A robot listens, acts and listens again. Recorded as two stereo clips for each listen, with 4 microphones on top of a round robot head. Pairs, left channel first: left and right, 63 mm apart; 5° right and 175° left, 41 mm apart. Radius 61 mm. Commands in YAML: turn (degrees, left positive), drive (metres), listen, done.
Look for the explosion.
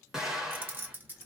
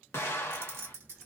done: "Found it: an explosion, straight ahead."